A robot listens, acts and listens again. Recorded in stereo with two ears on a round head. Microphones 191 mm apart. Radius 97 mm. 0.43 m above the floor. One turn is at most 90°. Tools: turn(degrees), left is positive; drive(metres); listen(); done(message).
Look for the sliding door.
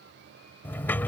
turn(degrees=30)
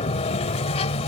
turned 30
turn(degrees=90)
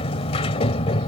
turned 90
turn(degrees=35)
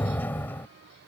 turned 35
turn(degrees=10)
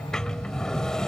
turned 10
done("Found it: a sliding door, straight ahead.")